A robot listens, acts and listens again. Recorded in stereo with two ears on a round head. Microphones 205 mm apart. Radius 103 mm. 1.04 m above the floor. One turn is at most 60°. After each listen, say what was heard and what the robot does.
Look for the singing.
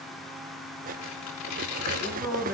Turn 30° left.
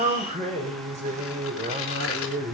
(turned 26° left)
So it is at 35° right. Turn 35° right.
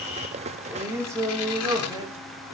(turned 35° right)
The singing is now 20° right. Turn 20° right.
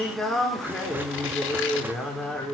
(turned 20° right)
Found it: singing, straight ahead, 2 to 4 m away.